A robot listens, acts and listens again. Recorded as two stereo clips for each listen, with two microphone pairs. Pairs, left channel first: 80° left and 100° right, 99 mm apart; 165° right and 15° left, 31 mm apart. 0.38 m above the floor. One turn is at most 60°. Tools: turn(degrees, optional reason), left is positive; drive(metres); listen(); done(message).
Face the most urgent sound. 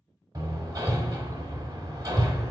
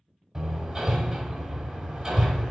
listen()
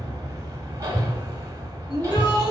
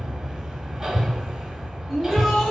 turn(degrees=60, reason="The shout: 110° left.")
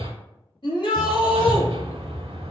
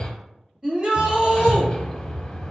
turn(degrees=60, reason="The shout is now 65° left.")
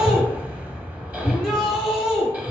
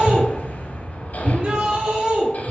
turn(degrees=-10, reason="The shout is now 10° right.")
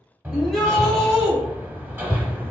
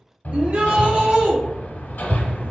done("Found it: a shout, straight ahead.")